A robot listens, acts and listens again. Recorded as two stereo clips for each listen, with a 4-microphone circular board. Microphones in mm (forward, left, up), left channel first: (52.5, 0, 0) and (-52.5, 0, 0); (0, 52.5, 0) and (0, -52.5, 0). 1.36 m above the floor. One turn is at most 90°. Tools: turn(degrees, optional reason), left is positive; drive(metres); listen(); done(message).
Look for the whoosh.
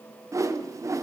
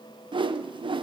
turn(degrees=-90, reason="The whoosh: 120° right.")
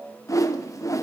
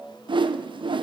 turn(degrees=-55, reason="The whoosh is now 55° right.")
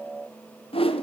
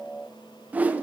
turn(degrees=-15, reason="The whoosh is now 15° right.")
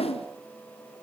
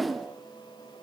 done("Facing the whoosh, under 1 m away.")